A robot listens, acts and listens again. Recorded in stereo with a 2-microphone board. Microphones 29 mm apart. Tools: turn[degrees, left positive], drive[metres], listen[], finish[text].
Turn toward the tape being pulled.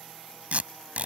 Thought: The tape being pulled: about 55° right or 125° right.
Action: turn[-55]
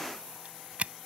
Thought: So it is at 65° right.
Action: turn[-65]
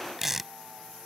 Thought: The tape being pulled is now 10° right.
Action: turn[-10]
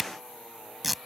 Action: finish[Facing the tape being pulled.]